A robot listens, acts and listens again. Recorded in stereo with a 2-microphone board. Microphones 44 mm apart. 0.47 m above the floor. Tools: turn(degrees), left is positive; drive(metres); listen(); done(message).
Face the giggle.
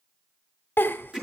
turn(degrees=60)
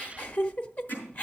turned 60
turn(degrees=40)
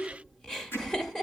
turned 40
turn(degrees=10)
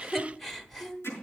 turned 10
done("Facing the giggle.")